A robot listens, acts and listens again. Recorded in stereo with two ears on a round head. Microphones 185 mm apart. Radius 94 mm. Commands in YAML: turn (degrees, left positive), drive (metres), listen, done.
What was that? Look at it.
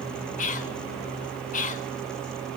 turn: 40
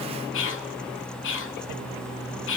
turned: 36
turn: 100
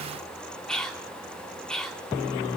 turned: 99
done: "Facing the whispering."